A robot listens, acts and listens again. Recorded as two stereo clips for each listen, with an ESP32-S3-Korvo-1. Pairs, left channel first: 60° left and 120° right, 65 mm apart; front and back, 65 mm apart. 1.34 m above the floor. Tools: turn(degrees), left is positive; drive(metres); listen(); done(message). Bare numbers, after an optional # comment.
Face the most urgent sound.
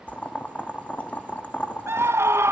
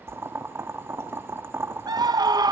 # The scream: 170° right.
turn(-170)
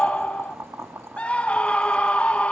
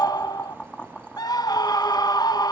# The scream is now 10° right.
turn(-10)
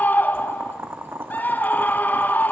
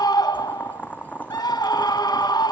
done("Facing the scream, 1 to 2 m away.")